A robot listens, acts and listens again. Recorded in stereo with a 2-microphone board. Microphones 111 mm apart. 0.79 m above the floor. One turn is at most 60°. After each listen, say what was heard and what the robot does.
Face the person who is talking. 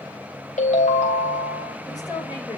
The woman speaking: about 35° left or 145° left. Turn 35° left.
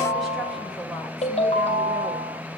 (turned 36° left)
Keep listening.
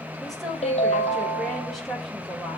Facing the woman speaking, over 4 m away.